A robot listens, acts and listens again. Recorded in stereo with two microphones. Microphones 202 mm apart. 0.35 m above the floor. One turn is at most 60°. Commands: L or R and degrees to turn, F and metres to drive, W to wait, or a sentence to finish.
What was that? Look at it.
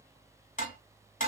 L40
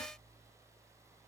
W
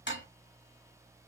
L60
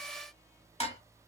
L35
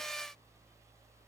W
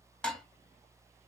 Facing the dishes clattering.